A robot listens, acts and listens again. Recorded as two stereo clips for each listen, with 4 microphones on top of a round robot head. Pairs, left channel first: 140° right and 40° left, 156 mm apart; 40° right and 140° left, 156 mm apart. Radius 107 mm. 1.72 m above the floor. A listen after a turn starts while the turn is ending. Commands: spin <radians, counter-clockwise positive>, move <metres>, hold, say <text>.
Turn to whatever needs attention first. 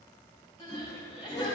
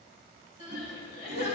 spin -1.40
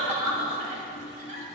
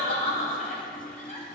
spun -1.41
say Facing the crying, 2 to 4 m away.